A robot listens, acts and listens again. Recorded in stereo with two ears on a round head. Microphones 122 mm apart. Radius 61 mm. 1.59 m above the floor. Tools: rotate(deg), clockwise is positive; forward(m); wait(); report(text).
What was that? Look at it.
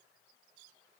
wait()
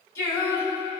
rotate(-25)
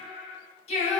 rotate(-130)
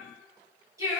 rotate(25)
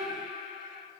report("Found it: singing, straight ahead, over 4 m away.")